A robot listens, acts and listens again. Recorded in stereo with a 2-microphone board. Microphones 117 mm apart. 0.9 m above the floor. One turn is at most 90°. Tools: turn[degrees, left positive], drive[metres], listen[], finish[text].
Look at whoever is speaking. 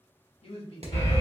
Thought: The man speaking: about 60° left or 120° left.
Action: turn[60]
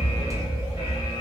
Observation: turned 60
Action: listen[]
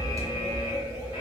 Action: listen[]
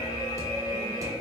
Action: finish[I heard a man speaking, but can't make it out now. It was about straight ahead or 60° left.]